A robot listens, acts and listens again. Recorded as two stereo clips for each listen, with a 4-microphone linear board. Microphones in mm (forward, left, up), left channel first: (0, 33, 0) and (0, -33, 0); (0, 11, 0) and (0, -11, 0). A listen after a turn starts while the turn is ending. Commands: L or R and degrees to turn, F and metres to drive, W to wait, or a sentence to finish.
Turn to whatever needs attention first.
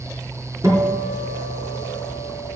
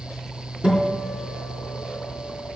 W
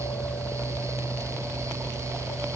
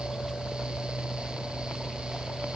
W
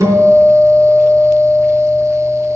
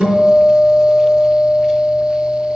I can't make out anything urgent to turn to.